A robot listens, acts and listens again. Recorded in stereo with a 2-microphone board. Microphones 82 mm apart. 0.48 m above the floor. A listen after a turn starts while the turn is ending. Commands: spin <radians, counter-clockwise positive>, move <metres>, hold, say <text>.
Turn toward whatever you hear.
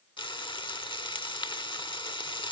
spin 1.57
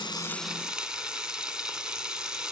spin -0.17
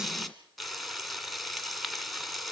say Facing the frying.